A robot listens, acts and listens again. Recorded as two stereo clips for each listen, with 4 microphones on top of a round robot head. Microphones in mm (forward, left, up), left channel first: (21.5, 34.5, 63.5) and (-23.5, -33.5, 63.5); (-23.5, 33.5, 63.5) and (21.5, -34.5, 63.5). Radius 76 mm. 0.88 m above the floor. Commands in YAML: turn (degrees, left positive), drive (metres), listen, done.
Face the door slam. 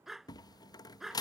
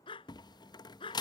turn: 95
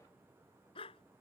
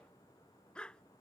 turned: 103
turn: -10
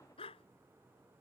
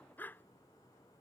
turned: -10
done: "I heard a door slam from this way, but can't make it out now."